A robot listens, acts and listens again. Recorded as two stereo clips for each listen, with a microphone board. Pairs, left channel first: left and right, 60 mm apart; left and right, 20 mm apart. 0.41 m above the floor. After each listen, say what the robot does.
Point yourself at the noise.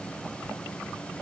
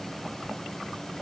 Keep listening.
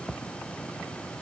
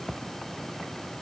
Keep listening.
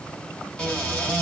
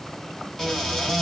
Turn 15° left.
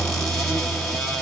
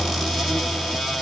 Facing the cupboard door, 2 to 4 m away.